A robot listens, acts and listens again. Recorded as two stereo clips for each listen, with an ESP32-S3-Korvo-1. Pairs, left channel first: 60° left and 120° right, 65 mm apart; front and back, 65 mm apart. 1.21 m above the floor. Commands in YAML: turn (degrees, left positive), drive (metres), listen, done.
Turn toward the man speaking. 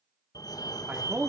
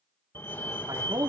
turn: 180
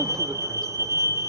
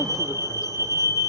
listen: true
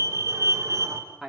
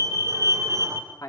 turn: -25
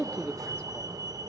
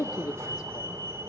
turn: -15
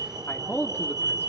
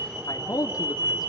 done: "Found it: a man speaking, straight ahead, 2 to 4 m away."